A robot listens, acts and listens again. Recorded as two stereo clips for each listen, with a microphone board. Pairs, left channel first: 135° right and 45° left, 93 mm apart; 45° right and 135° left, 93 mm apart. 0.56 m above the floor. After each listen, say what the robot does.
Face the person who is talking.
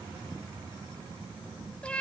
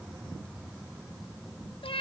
Keep listening.
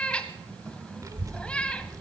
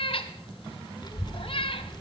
Turn 10° right.
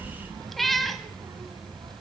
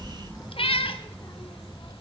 Facing the child speaking, under 1 m away.